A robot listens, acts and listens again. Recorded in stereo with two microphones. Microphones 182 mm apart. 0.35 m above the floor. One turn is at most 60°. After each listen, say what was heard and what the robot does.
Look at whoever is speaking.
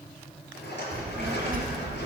The child speaking: about 55° right or 125° right. Turn 55° right.
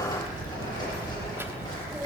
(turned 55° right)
So it is at 15° right. Turn 15° right.
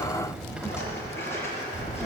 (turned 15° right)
Facing the child speaking.